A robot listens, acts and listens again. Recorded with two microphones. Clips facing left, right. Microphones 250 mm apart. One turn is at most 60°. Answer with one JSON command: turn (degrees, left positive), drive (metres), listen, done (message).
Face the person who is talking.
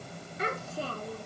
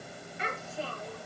{"turn": 40}
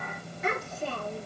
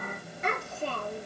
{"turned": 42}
{"done": "Found it: a child speaking, straight ahead, over 4 m away."}